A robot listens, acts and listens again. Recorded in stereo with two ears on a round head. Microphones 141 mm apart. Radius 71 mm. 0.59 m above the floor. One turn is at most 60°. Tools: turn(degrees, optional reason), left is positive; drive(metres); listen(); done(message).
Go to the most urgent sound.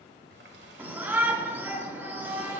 turn(degrees=-30)
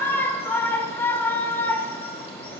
turn(degrees=15, reason="So it is at 15° left.")
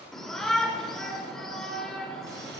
drive(metres=1.0)
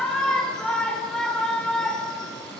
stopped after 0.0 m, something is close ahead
done("Blocked. The shout is further on, straight ahead.")